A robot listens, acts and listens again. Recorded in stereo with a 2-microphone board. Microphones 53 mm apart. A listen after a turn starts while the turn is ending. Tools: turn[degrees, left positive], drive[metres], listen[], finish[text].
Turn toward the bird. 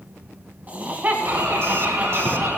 Thought: The bird: about 70° right or 110° right.
Action: turn[-70]
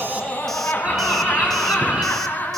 Thought: So it is at 25° right.
Action: turn[-25]
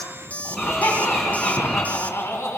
Action: finish[Facing the bird.]